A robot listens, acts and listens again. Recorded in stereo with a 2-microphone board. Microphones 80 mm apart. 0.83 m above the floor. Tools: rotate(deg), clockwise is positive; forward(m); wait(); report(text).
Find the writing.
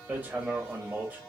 wait()
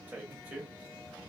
wait()
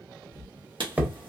rotate(70)
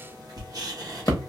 rotate(45)
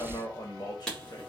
rotate(-10)
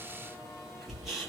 report("Found it: writing, straight ahead.")